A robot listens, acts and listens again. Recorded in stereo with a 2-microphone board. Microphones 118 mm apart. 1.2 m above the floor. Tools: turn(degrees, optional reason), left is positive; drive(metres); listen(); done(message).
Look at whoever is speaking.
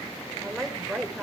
turn(degrees=30)
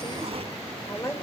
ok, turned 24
turn(degrees=155, reason="So it is at 155° left.")
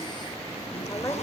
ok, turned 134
turn(degrees=20, reason="Nothing new. It was at 20° left.")
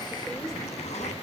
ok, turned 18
listen()
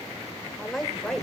done("Found it: a woman speaking, straight ahead.")